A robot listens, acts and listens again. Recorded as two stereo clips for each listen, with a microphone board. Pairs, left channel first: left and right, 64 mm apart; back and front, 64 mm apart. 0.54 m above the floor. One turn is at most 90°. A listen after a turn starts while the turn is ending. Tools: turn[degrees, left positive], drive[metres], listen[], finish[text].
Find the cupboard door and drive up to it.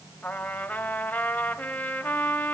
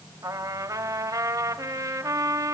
Action: listen[]
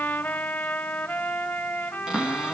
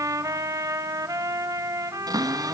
Thought: The cupboard door: 10° right.
Action: turn[-10]
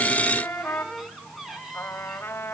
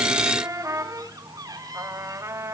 Action: drive[1.0]
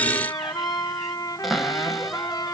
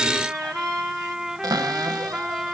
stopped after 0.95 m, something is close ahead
Action: finish[I am next to the cupboard door.]